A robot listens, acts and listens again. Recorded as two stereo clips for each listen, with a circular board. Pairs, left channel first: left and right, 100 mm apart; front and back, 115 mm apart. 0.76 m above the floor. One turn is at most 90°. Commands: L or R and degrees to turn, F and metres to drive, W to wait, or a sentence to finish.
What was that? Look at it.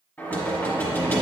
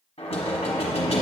L25
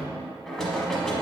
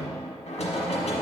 Facing the knocking.